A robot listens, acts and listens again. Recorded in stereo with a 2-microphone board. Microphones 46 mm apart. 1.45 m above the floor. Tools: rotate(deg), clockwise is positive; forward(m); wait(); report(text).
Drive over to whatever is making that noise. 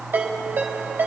rotate(60)
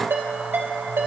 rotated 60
rotate(60)
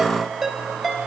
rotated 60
forward(1.0)
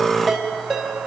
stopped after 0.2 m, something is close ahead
report("Blocked. The ringtone is further on, straight ahead.")